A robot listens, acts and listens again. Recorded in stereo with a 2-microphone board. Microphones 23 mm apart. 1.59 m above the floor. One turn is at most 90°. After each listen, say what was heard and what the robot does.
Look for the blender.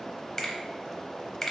Keep listening.
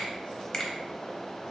Keep listening.
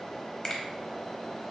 I can't make out a blender, only a finger snap.